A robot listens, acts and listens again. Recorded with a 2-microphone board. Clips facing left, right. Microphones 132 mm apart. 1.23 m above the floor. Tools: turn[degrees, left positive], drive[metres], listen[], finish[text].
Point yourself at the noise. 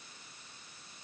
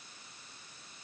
Action: listen[]
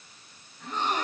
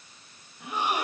Action: turn[-30]
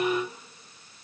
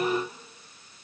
Action: listen[]
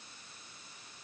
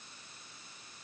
Action: finish[I heard a gasp, but can't make it out now. It was about 20° left or 140° right.]